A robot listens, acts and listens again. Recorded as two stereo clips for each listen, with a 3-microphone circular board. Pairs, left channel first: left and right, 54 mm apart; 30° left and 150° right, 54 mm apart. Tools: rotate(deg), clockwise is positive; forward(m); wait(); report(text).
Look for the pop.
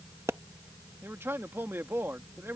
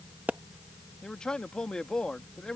rotate(95)
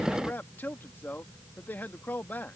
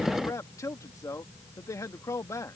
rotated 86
rotate(10)
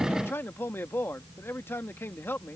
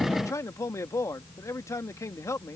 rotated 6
report("I heard a pop from this way, but can't make it out now.")